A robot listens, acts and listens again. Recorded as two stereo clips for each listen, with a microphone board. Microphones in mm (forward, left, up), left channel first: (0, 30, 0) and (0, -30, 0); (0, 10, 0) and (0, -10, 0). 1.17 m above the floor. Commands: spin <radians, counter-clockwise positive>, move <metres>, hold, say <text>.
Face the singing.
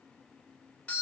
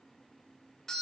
hold
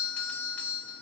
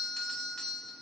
hold
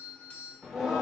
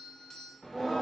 spin -0.52
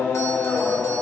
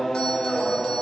spin 0.44
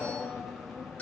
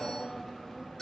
say Facing the singing.